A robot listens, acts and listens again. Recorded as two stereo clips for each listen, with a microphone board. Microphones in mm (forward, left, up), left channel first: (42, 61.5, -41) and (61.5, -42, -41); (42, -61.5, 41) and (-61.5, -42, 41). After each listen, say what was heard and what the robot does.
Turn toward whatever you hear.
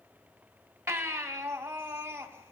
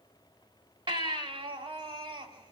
The baby crying: 150° right. Turn 150° right.
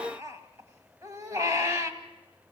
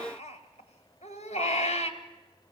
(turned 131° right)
The baby crying is now 20° right. Turn 20° right.
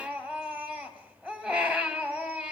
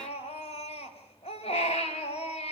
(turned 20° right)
Facing the baby crying, 1 to 2 m away.